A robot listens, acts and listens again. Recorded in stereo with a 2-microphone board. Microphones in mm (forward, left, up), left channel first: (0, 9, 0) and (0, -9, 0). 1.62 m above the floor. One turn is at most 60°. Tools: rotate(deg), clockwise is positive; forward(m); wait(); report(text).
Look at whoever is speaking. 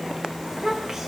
rotate(30)
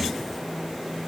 wait()
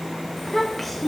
report("Facing the child speaking, 1 to 2 m away.")